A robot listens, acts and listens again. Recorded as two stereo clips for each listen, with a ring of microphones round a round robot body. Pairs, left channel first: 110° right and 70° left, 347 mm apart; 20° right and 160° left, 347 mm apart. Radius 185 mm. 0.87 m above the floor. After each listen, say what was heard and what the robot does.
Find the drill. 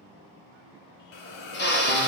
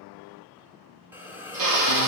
The drill: 175° right. Turn 175° right.
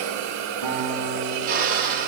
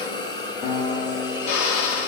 Facing the drill, 1 to 2 m away.